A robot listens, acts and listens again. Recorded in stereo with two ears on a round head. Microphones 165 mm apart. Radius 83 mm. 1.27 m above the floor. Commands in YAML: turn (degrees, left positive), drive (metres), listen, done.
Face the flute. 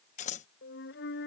turn: 65
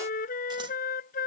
turn: 45
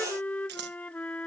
turn: 10
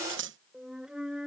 done: "Facing the flute."